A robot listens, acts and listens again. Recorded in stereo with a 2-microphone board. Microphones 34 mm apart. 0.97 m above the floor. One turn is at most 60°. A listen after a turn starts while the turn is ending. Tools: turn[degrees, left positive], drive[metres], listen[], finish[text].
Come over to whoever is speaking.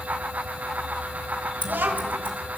Action: turn[-60]
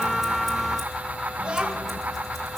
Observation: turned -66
Thought: So it is at 30° right.
Action: turn[-30]
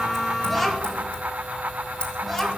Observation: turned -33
Action: drive[1.0]
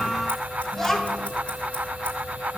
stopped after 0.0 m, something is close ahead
Thought: The child speaking is now 10° left.
Action: turn[10]
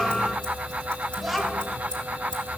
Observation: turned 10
Action: finish[Blocked. The child speaking is further on, straight ahead.]